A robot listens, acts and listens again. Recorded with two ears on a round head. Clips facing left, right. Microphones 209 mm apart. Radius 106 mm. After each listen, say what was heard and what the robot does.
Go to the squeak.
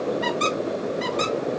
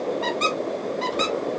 The squeak: about 25° left or 155° left. Turn 25° left.
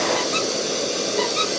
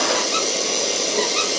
Keep listening.
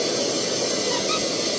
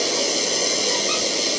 Keep listening.
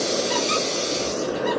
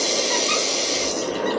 I heard a squeak, but can't make it out now. It was about straight ahead or 130° left. I did not reach it.